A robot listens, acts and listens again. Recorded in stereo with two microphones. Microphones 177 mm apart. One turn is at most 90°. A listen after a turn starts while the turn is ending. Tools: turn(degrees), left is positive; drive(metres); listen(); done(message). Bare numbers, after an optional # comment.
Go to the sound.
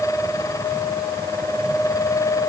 listen()
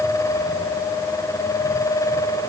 listen()
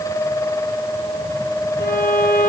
# The violin: about 65° left or 115° left.
turn(65)
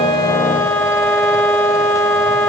# So it is at 10° left.
turn(10)
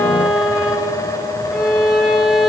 drive(1.0)
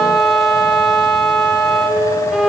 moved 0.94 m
drive(1.0)
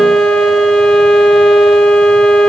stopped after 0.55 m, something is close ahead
done("I am next to the violin.")